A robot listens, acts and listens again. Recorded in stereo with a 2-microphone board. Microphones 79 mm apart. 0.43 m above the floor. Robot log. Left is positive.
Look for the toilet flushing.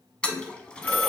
cmd yaw +30
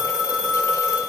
cmd idle
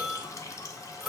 note: So it is at 135° left.
cmd yaw +135
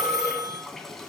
end: Found it: a toilet flushing, straight ahead.